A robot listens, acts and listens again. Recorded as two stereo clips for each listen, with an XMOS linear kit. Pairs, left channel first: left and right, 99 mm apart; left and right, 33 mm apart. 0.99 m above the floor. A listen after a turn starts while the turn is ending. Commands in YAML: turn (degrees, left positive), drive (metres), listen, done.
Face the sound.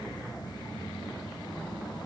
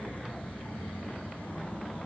listen: true
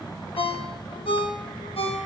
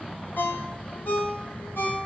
turn: 70
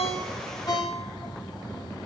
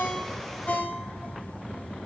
turn: 40
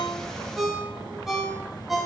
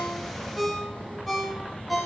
done: "Found it: a ringtone, straight ahead, under 1 m away."